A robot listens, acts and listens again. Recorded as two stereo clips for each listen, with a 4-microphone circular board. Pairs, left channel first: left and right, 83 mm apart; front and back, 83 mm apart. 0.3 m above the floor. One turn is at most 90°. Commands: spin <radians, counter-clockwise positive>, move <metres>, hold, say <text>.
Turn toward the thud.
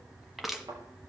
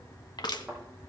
spin -1.57
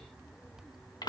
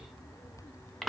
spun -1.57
spin -0.17
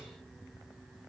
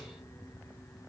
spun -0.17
say I heard a thud from this way, but can't make it out now.